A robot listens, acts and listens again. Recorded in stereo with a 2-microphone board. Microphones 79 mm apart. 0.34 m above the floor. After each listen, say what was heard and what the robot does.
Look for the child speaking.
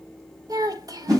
The child speaking: about 50° right or 130° right. Turn 50° right.
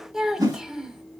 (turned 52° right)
Found it: a child speaking, straight ahead, 1 to 2 m away.